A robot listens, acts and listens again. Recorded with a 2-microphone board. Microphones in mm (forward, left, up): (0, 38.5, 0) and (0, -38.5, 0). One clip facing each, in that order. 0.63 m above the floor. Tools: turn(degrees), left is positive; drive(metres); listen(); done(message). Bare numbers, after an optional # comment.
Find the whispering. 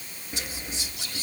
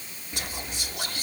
# The whispering: about 55° right or 125° right.
turn(-55)
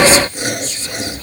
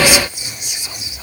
# So it is at 15° right.
turn(-15)
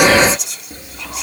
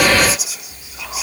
done("Facing the whispering.")